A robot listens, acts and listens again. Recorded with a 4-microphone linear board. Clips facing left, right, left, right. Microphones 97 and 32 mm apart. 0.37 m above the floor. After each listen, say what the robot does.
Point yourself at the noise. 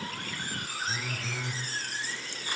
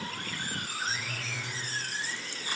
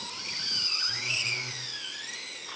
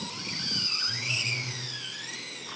Turn 40° left.
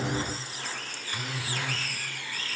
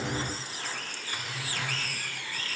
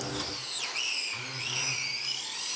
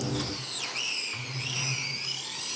Turn 100° left.
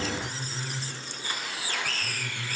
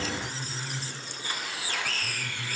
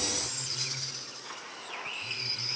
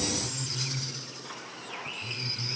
Found it: a phone buzzing, straight ahead.